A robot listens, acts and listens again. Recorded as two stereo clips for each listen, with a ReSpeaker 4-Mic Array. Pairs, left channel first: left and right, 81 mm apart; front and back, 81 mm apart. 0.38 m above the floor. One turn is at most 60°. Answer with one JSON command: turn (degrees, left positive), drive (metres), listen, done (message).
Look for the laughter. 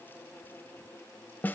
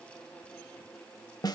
{"listen": true}
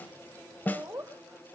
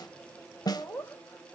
{"turn": -45}
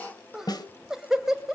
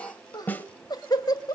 {"done": "Facing the laughter."}